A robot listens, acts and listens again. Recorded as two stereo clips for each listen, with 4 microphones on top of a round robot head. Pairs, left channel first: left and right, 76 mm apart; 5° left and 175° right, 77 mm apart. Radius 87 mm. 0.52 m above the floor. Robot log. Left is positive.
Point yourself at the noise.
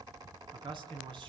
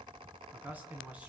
note: The man speaking: 100° right.
cmd yaw -100
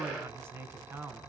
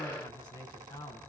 note: The man speaking is now 30° right.
cmd yaw -30
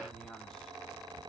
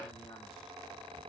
cmd idle
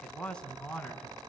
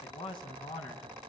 note: The man speaking is now 15° left.
cmd yaw +15
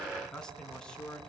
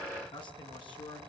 note: The man speaking is now 10° left.
cmd yaw +10
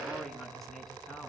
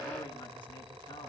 cmd idle
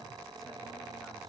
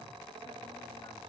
cmd idle
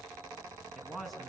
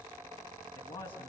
end: Facing the man speaking.